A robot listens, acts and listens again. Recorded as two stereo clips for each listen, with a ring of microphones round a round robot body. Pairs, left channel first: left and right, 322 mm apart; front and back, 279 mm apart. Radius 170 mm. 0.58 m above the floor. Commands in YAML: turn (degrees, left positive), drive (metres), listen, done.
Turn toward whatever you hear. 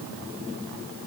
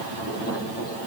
listen: true
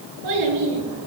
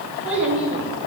turn: -95
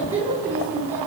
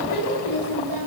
done: "Found it: a child speaking, straight ahead, over 4 m away."